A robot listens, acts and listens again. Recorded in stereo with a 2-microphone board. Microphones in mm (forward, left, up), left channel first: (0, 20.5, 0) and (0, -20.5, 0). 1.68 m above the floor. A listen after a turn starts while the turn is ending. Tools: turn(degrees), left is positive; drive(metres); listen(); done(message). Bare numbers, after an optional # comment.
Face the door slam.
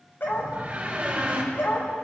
# The door slam: about 25° right or 155° right.
turn(-25)
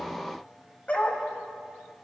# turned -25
listen()
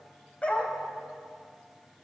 done("I heard a door slam, but can't make it out now. It was about straight ahead or 130° right.")